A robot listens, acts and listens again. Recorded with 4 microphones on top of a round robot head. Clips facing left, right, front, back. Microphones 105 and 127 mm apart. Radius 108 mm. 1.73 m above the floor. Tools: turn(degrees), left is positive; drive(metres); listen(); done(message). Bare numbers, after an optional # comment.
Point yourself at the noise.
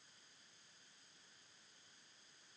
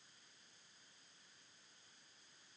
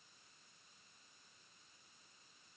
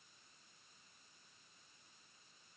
listen()
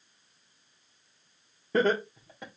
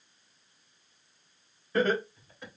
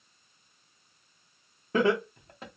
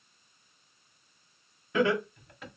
# The laughter: 50° left.
turn(50)
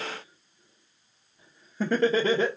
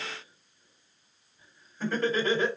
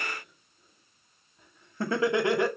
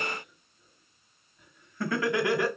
# The laughter is now 65° left.
turn(65)
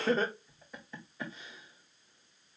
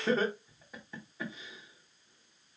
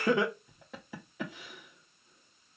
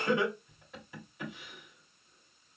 done("Found it: laughter, straight ahead, 1 to 2 m away.")